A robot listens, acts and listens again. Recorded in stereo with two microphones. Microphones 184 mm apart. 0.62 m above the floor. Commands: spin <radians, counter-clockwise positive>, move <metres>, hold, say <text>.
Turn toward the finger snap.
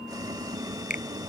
spin 0.79
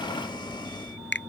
spin 1.57
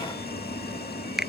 say Facing the finger snap.